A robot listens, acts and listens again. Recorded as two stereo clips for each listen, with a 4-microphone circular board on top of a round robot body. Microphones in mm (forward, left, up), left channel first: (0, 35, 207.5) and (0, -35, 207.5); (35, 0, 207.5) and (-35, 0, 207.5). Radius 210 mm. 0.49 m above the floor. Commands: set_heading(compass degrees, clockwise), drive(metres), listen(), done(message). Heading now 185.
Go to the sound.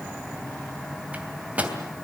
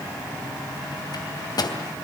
set_heading(205)
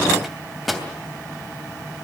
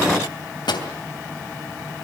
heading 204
drive(1.0)
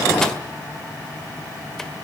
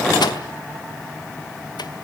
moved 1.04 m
listen()
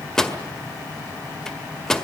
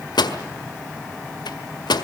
drive(1.0)
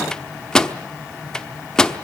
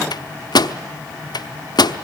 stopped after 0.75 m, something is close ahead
set_heading(194)
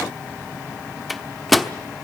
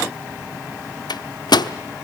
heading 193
done("I am next to the microwave.")